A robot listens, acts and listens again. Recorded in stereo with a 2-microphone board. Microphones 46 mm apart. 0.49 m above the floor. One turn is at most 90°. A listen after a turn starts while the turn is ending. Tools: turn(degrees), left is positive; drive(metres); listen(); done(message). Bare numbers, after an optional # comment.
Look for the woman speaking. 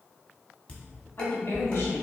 # The woman speaking: about 65° left or 115° left.
turn(65)
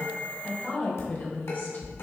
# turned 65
# So it is at 40° left.
turn(40)
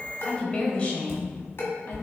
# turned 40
# The woman speaking is now 30° left.
turn(30)
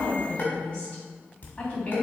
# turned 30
# The woman speaking is now 25° left.
turn(25)
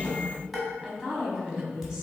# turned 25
# The woman speaking is now 15° right.
turn(-15)
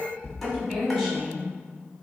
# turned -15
done("Found it: a woman speaking, straight ahead, 2 to 4 m away.")